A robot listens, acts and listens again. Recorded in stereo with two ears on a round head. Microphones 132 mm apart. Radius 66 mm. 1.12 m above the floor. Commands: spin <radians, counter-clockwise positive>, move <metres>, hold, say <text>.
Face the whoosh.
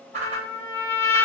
spin -0.79
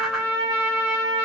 hold
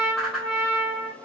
say Facing the whoosh, under 1 m away.